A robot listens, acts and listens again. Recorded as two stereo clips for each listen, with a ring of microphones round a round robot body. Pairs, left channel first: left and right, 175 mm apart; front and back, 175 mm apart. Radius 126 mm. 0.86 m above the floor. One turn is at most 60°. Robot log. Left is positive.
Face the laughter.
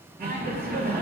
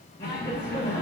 note: The laughter: 75° right.
cmd yaw -60
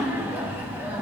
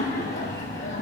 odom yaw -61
note: The laughter is now 15° right.
cmd yaw -15
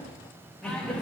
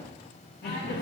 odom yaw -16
end: Found it: laughter, straight ahead, 1 to 2 m away.